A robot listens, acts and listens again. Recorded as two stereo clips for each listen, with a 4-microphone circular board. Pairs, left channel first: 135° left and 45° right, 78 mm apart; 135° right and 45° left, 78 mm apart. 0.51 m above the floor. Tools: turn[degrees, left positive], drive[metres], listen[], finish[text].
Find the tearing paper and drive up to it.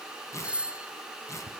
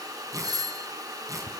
Thought: The tearing paper: 85° left.
Action: turn[85]
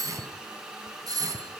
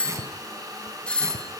Action: listen[]
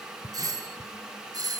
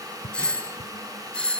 Action: listen[]
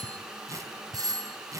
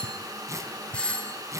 Action: drive[1.0]
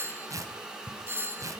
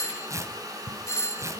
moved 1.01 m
Action: drive[1.0]
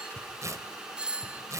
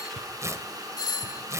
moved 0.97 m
Action: drive[1.0]
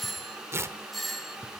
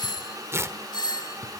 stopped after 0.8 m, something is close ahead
Action: finish[Arrived at the tearing paper, straight ahead.]